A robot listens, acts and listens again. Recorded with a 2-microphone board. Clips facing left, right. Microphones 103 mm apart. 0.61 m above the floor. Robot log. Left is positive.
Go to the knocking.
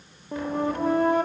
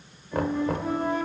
note: The knocking: about 60° right or 120° right.
cmd yaw -60
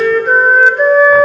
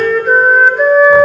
cmd idle
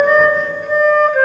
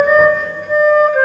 cmd idle
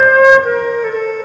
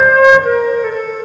end: I heard knocking, but can't make it out now. It was about straight ahead or 60° right. I did not reach it.